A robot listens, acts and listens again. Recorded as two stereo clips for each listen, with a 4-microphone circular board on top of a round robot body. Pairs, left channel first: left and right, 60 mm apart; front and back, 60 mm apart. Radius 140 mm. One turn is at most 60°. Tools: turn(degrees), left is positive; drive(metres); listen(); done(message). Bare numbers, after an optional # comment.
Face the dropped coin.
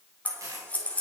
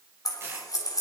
# The dropped coin: 130° right.
turn(-60)
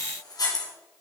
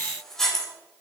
# Nothing new. It was at 70° right.
turn(-60)
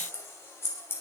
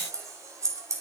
# Nothing new. It was at 10° right.
turn(-10)
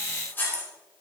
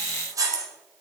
done("I heard a dropped coin from this way, but can't make it out now.")